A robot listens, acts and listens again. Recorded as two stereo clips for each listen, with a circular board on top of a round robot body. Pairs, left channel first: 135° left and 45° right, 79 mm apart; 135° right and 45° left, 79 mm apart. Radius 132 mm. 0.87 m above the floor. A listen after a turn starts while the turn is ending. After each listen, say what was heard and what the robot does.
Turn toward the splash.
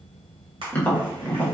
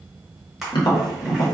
The splash: 45° right. Turn 45° right.
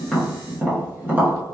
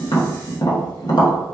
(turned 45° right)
I heard a splash from this way, but can't make it out now.